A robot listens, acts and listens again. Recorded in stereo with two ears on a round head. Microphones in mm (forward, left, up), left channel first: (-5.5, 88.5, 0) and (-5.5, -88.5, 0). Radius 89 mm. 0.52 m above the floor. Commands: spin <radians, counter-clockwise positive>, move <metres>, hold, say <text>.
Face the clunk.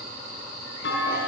spin 1.13
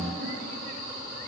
hold
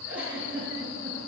say I heard a clunk, but can't make it out now. It was about straight ahead or 50° left.